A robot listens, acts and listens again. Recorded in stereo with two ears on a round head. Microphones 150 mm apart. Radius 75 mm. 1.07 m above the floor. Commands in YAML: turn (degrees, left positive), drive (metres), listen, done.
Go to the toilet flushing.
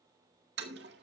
turn: -70
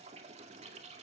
turn: -40
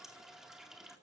drive: 1.0
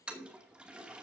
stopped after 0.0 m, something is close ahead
done: "Blocked. The toilet flushing is further on, straight ahead."